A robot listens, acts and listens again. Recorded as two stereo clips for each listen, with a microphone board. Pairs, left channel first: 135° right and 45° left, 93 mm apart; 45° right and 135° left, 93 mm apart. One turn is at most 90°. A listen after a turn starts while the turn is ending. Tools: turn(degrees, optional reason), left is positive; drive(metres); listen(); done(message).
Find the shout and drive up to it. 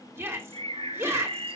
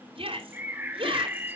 turn(degrees=90, reason="The shout: 110° left.")
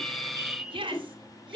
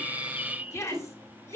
turn(degrees=15, reason="The shout is now 15° left.")
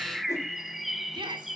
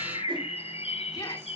drive(metres=1.0)
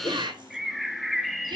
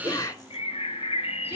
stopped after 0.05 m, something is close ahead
done("Blocked. The shout is further on, straight ahead.")